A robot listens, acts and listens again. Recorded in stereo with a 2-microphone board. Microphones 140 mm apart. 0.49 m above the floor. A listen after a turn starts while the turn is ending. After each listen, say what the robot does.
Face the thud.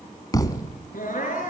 Turn 25° left.
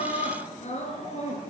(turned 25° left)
Keep listening.
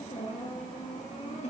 I heard a thud, but can't make it out now. It was about straight ahead or 130° left.